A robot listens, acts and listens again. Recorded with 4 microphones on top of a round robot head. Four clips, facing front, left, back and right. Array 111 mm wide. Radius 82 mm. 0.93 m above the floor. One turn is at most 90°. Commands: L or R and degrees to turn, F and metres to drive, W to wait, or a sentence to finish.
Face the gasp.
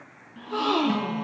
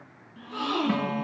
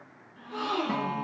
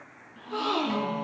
R15
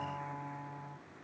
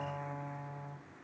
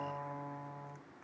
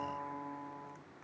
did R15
Facing where the gasp came from. I can't hear it now.